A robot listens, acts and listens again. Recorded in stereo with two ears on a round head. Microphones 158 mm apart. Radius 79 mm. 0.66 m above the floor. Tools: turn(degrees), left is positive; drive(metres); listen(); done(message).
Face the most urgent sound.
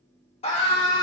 turn(degrees=35)
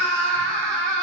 done("Found it: a scream, straight ahead, 1 to 2 m away.")